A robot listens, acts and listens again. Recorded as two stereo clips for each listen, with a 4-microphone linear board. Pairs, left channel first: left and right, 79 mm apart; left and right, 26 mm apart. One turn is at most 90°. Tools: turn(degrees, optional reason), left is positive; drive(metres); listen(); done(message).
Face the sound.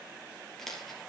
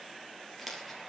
turn(degrees=30)
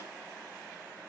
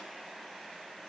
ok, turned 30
listen()
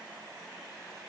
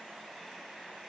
done("I heard a dropped coin, but can't make it out now. It was about 25° right or 145° left.")